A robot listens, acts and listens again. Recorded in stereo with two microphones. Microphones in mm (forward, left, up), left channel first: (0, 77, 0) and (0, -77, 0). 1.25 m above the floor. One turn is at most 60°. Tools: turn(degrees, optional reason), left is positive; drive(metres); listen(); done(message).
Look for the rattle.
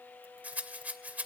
turn(degrees=-30)
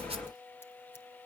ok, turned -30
listen()
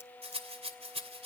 turn(degrees=-60, reason="So it is at 140° right.")
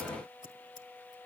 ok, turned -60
turn(degrees=-60, reason="Nothing new. It was at 80° right.")
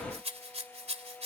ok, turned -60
turn(degrees=-45, reason="The rattle is now 45° right.")
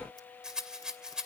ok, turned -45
done("Facing the rattle.")